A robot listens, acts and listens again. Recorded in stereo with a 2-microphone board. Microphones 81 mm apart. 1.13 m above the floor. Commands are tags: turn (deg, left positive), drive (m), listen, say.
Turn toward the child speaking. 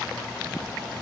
<listen/>
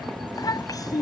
<turn deg="50"/>
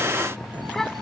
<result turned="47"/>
<say>Found it: a child speaking, straight ahead.</say>